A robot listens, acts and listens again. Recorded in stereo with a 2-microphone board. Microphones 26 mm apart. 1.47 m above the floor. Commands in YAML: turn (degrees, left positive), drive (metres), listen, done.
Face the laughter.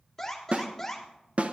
listen: true
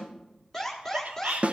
turn: -60
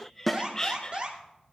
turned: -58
turn: 25
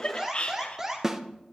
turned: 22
turn: 40
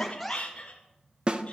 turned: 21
turn: 45
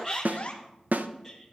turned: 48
done: "Facing the laughter, 1 to 2 m away."